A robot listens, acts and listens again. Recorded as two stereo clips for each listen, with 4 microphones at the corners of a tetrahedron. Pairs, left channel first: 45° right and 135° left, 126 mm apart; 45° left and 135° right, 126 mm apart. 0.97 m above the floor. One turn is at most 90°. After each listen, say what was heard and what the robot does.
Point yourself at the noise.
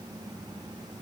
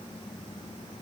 Keep listening.
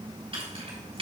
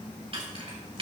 The keys jangling: straight behind. Turn 90° left.
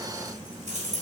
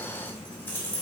The keys jangling is now 120° left. Turn 90° left.
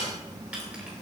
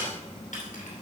Nothing new. It was at 30° left. Turn 30° left.
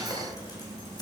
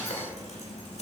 Keep listening.
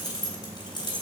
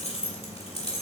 The keys jangling is now 10° left. Turn 10° left.
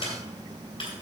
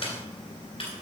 Facing the keys jangling, 2 to 4 m away.